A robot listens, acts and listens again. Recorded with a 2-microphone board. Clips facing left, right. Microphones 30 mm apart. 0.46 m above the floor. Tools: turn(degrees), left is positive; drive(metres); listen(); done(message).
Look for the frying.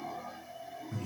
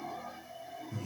listen()
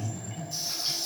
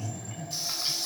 turn(degrees=-90)
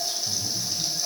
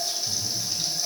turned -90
done("Facing the frying, 1 to 2 m away.")